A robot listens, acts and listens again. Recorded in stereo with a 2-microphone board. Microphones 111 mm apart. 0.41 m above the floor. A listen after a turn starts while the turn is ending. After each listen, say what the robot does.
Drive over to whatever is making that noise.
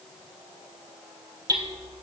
Turn 35° right.
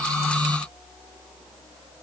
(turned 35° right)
Keep listening.
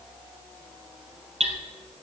Turn 110° right.
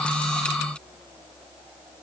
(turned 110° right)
Keep listening.
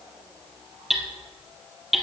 Drive 1.0 m forward.
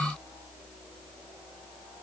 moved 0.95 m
Keep listening.
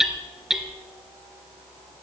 Drive 1.0 m forward.
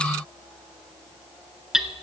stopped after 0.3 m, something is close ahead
Arrived at the hammering, straight ahead.